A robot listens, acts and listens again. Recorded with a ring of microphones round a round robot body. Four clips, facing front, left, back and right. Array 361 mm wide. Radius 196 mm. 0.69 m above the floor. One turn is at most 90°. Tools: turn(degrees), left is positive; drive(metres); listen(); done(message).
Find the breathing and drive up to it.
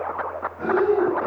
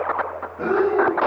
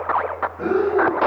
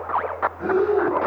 turn(degrees=90)
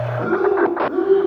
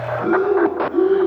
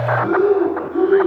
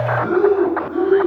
turn(degrees=20)
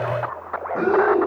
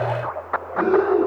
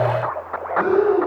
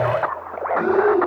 drive(metres=1.0)
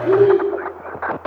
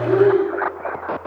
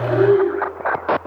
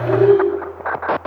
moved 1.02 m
drive(metres=1.0)
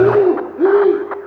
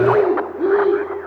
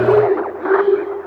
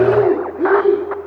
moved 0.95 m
drive(metres=1.0)
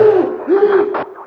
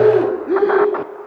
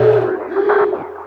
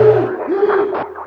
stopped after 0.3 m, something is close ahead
done("I am next to the breathing.")